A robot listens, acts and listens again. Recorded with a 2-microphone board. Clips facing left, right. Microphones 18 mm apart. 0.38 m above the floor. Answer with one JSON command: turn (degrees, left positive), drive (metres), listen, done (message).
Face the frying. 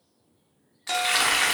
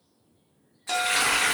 {"turn": 50}
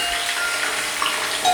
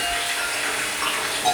{"turn": 80}
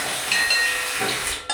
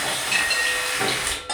{"turn": -20}
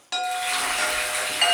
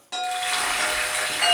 {"done": "Facing the frying."}